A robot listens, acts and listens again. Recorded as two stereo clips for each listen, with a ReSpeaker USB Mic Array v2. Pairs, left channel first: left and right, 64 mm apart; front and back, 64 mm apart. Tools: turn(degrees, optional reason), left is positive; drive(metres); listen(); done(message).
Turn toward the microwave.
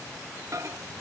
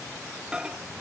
turn(degrees=-110, reason="The microwave: 110° right.")
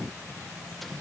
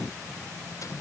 listen()
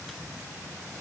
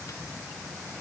listen()
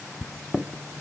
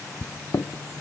done("Facing the microwave, under 1 m away.")